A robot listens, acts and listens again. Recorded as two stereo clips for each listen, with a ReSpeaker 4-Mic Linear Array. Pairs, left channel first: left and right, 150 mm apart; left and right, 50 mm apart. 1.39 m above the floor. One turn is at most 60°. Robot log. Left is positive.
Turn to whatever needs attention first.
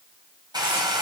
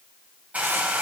cmd idle
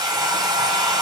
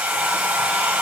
cmd idle
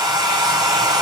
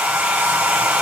end: I can't make out anything urgent, only a hair dryer.